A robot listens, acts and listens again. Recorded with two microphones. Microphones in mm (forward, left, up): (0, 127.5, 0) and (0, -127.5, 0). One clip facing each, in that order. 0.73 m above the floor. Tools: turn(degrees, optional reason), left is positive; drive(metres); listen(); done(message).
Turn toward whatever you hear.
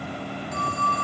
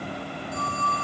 turn(degrees=90)
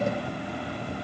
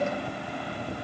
listen()
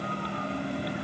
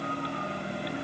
listen()
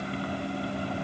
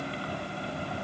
done("Facing where the phone ringing came from. I can't hear it now.")